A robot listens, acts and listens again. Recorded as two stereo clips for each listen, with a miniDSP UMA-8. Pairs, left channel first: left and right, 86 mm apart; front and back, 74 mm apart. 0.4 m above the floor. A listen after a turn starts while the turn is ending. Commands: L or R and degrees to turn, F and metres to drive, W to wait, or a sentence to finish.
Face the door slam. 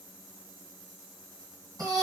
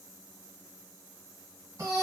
W
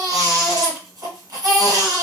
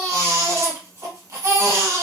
W
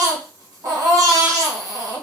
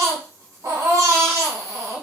I can't make out a door slam to turn to.